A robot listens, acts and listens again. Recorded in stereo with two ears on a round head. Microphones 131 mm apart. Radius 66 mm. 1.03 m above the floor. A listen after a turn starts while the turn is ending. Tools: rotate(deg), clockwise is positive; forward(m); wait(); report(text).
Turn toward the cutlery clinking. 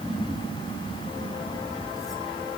wait()
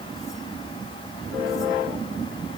wait()
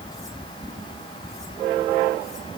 report("I can't make out cutlery clinking.")